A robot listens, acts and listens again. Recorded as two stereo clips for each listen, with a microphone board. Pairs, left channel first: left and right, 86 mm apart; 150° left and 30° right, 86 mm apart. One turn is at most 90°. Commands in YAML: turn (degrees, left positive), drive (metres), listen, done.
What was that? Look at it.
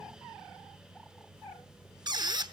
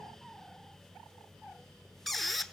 turn: -90
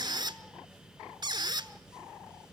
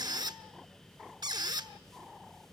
turn: -60
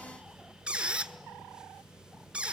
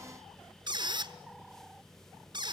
turn: -15
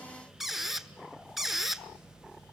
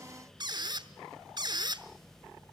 done: "Facing the squeak."